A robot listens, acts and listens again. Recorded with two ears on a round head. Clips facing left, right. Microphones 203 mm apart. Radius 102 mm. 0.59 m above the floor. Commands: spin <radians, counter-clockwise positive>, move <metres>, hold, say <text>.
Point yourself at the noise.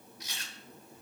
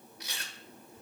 spin -0.87
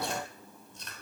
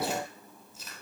say Facing the chewing, 1 to 2 m away.